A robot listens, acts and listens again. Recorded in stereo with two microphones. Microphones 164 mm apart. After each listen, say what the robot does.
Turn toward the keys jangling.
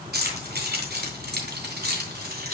Turn 65° right.
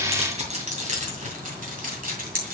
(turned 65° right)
Turn 60° right.
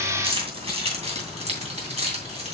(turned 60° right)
Turn 40° right.
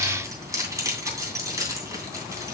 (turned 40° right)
Turn 20° right.
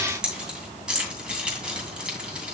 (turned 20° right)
Facing the keys jangling.